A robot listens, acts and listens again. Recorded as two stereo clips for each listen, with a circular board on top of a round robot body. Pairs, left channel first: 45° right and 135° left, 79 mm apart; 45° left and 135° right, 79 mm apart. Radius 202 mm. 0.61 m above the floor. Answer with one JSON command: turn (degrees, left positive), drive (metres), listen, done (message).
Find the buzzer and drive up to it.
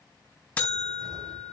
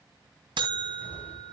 {"turn": -115}
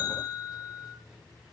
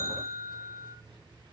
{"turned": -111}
{"drive": 1.0}
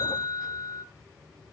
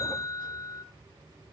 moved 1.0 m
{"turn": -10}
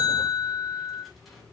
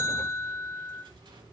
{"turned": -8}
{"drive": 1.0}
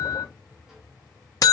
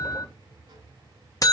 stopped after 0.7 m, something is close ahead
{"done": "I am next to the buzzer."}